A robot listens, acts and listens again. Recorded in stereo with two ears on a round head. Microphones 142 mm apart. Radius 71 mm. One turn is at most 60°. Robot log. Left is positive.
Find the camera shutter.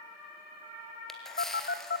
cmd yaw +30
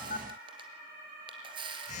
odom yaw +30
note: So it is at 30° right.
cmd yaw -30
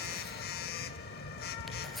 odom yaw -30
cmd idle
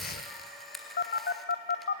end: Facing the camera shutter.